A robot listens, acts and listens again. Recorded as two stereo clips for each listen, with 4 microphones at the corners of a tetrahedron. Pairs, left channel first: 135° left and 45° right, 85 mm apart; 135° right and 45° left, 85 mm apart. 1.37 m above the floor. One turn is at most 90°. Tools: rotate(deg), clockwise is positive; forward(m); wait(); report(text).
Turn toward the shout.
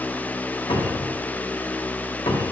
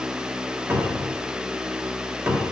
wait()
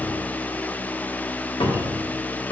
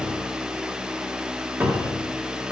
wait()
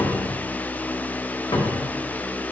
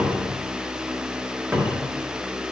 report("I can't make out a shout, only a cupboard door.")